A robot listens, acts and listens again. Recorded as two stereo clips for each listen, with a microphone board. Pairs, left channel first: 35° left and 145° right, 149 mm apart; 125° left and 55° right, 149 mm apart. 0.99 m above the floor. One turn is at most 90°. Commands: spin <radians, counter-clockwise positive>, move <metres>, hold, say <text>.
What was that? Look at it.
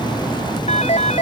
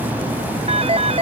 spin -0.17
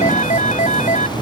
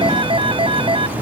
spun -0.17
say Found it: a phone ringing, straight ahead.